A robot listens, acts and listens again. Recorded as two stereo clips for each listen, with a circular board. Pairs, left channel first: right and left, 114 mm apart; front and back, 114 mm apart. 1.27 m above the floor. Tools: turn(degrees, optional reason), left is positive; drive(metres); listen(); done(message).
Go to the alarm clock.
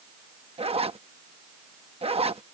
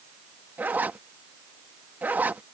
listen()
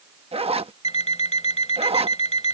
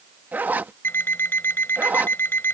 turn(degrees=-70, reason="The alarm clock: 70° right.")
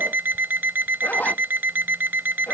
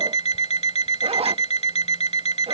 turn(degrees=20, reason="The alarm clock is now 20° left.")
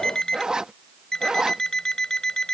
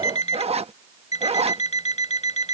drive(metres=1.0)
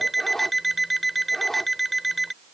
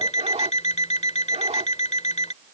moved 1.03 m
drive(metres=1.0)
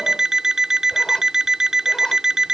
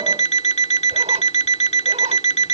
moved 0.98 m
drive(metres=1.0)
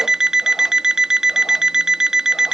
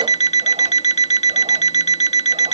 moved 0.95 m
drive(metres=1.0)
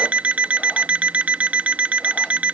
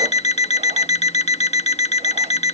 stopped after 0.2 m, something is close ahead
turn(degrees=15, reason="The alarm clock is now 15° left.")
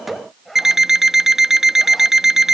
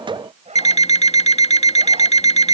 done("I am next to the alarm clock.")